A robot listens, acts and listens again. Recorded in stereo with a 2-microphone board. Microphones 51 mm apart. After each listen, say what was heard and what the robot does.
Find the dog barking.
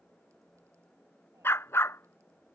The dog barking: about 60° left or 120° left. Turn 60° left.
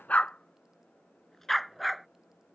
Facing the dog barking.